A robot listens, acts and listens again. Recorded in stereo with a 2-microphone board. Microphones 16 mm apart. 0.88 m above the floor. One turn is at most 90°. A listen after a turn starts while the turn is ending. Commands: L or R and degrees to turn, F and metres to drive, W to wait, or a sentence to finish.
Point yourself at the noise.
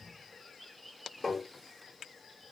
L20
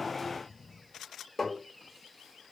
Found it: tapping, straight ahead.